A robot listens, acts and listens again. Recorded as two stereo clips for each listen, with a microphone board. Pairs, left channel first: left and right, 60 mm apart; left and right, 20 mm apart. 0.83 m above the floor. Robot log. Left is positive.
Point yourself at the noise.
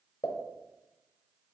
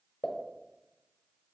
note: The pop: about 70° left or 110° left.
cmd yaw +70
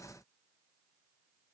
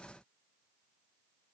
cmd idle
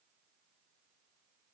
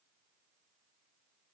end: I heard a pop, but can't make it out now. It was about straight ahead or 40° left.